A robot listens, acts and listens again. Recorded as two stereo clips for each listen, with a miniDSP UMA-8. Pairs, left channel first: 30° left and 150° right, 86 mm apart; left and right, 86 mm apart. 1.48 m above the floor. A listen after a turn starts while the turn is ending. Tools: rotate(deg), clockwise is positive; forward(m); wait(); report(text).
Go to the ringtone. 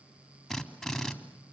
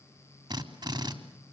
wait()
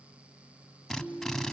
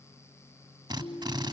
rotate(-120)
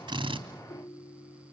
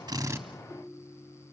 rotate(-15)
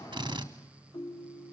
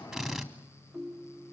forward(1.0)
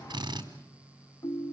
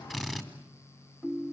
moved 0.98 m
forward(1.0)
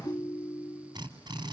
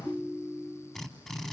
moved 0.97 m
rotate(10)
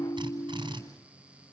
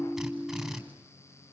forward(1.0)
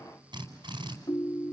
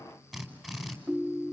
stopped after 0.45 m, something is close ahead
rotate(10)
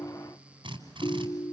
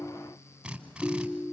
report("I am next to the ringtone.")